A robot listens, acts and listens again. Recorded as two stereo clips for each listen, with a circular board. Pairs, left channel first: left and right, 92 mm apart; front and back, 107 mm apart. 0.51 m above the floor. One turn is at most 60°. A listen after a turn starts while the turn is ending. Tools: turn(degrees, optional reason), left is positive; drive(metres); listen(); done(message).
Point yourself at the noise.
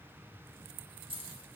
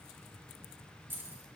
turn(degrees=-60, reason="The keys jangling: 110° right.")
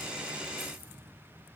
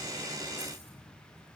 turn(degrees=-50, reason="Nothing new. It was at 50° right.")
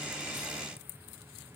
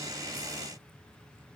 listen()
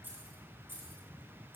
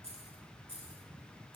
turn(degrees=-25, reason="The keys jangling is now 25° right.")
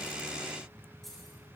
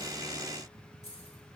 done("Facing the keys jangling, over 4 m away.")